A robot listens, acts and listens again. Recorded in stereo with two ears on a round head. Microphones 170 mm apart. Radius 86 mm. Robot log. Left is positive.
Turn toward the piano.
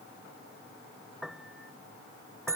cmd yaw +30
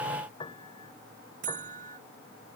note: So it is at 155° left.
cmd yaw +155
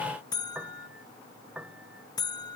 end: Facing the piano.